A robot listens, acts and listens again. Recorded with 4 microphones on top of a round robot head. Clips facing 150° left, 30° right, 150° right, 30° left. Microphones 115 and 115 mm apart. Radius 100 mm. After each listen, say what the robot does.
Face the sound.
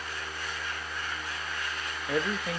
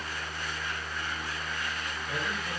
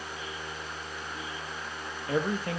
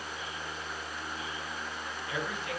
Turn 160° left.
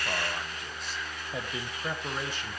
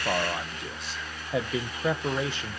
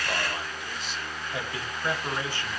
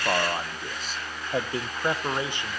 Turn 40° right.
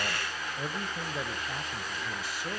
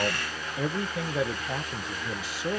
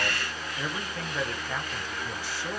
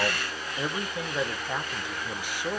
Turn 45° right.
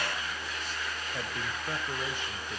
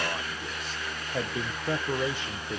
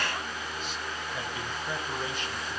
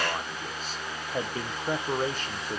Turn 20° right.
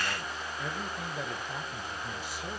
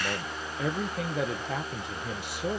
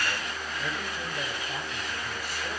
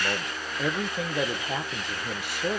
Found it: a man speaking, straight ahead.